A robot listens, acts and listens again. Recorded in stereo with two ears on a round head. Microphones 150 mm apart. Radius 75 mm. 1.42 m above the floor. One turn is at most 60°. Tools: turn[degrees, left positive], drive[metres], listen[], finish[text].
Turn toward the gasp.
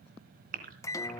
Thought: The gasp: about 50° right or 130° right.
Action: turn[-50]
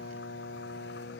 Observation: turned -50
Action: listen[]
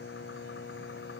Action: finish[I heard a gasp, but can't make it out now. It was about straight ahead or 80° right.]